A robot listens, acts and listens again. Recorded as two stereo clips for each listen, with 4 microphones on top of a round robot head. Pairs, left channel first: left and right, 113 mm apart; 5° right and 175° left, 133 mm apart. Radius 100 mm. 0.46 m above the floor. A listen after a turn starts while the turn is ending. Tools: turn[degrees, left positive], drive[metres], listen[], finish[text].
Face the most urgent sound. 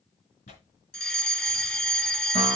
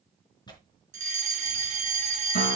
Thought: The fire alarm: 170° left.
Action: turn[170]
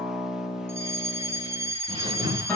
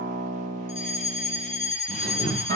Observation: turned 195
Thought: The fire alarm is now 25° right.
Action: turn[-25]
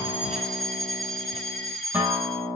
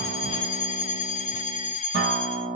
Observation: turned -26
Action: finish[Found it: a fire alarm, straight ahead.]